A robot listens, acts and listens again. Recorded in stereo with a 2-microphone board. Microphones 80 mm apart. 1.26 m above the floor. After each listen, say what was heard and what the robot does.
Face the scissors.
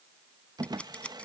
Turn 30° left.
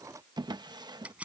So it is at 15° right. Turn 15° right.
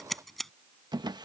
Facing the scissors.